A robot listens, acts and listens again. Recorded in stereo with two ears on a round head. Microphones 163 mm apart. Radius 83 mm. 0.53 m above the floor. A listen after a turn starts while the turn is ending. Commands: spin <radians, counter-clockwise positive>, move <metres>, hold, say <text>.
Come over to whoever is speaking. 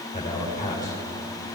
spin 0.87
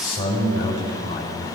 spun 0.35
spin 1.92
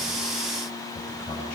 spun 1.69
spin 0.17
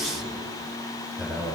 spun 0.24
move 1.0
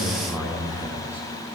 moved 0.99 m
spin -0.17
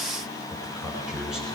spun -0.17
move 1.0
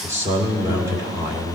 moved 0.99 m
spin -0.35
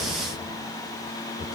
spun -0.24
move 1.0
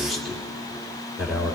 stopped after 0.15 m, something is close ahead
say I am next to the man speaking.